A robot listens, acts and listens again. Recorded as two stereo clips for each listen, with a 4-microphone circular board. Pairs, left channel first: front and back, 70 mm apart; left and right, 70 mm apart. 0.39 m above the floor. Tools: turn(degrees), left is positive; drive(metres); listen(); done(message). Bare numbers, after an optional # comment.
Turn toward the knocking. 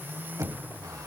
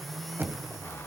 # The knocking: 145° right.
turn(-145)
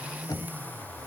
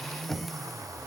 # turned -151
done("Facing the knocking, 1 to 2 m away.")